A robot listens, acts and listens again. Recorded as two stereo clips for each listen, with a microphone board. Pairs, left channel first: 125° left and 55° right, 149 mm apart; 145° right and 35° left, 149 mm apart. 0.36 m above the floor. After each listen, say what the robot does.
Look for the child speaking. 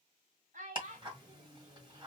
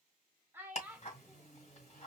Turn 45° right.
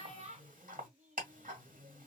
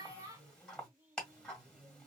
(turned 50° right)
Turn 30° right.
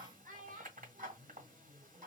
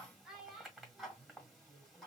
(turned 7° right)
Turn 55° right.
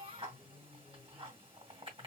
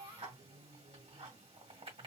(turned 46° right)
Turn 20° right.
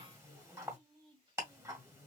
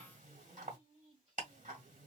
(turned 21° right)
Found it: a child speaking, straight ahead, 1 to 2 m away.